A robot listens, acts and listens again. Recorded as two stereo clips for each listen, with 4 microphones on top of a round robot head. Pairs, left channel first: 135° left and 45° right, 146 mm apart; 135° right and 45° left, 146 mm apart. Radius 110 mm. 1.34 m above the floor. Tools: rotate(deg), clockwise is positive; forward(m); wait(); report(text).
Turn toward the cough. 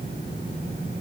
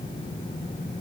wait()
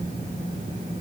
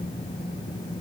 wait()
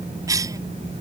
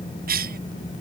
rotate(-25)
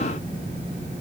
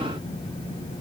wait()
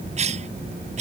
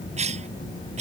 report("Found it: a cough, straight ahead.")